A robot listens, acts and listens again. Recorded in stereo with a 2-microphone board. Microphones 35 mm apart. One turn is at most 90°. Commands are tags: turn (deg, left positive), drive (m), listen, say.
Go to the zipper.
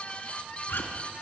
<turn deg="90"/>
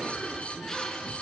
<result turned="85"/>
<turn deg="10"/>
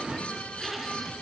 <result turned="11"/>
<drive m="1.0"/>
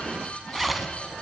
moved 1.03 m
<drive m="1.0"/>
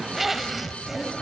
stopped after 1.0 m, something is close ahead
<say>Arrived at the zipper, straight ahead.</say>